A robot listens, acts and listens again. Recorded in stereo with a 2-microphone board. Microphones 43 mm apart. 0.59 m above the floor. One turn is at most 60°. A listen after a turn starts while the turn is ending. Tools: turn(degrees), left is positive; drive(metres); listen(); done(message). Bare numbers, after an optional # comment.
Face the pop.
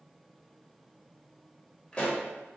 # The pop: about 25° left or 155° left.
turn(25)
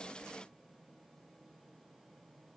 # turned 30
listen()
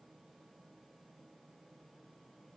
done("I heard a pop, but can't make it out now. It was about 5° right or 125° left.")